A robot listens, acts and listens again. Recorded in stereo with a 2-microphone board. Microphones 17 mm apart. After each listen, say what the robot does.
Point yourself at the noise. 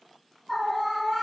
Turn 20° left.
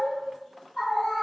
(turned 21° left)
Turn 140° left.
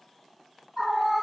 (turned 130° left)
Turn 10° left.
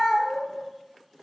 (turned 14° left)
Facing the scream.